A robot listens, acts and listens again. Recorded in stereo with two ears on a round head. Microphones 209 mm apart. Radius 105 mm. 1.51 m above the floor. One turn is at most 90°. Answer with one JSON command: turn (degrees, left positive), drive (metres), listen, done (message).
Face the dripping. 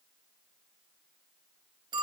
{"listen": true}
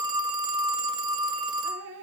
{"turn": -60}
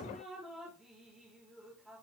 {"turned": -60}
{"done": "Facing the dripping."}